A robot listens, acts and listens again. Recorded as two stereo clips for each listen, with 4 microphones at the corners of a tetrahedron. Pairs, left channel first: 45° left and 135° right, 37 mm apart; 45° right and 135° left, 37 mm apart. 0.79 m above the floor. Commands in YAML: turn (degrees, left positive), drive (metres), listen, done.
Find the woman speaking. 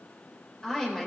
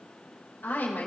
turn: -30
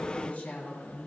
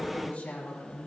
done: "Facing the woman speaking."